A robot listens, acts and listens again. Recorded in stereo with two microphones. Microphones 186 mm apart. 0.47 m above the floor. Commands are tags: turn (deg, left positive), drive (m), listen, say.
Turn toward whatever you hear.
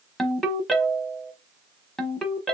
<turn deg="30"/>
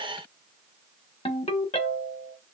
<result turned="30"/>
<turn deg="150"/>
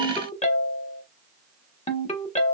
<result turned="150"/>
<turn deg="40"/>
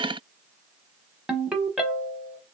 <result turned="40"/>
<say>Facing the ringtone, 1 to 2 m away.</say>